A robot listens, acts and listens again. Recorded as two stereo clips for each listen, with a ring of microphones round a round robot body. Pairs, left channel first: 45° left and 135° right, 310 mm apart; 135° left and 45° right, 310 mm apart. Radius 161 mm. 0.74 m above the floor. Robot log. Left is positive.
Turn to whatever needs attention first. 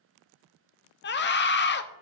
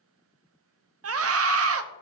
end: Facing the scream.